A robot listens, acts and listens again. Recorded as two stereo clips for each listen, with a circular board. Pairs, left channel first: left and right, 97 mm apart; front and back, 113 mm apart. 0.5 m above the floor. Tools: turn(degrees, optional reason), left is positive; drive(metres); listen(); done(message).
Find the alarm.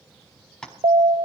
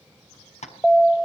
turn(degrees=-85, reason="The alarm: 85° right.")
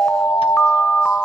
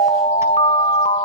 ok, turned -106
turn(degrees=15, reason="The alarm is now 15° left.")
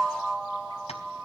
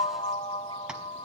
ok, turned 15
done("Found it: an alarm, straight ahead, 1 to 2 m away.")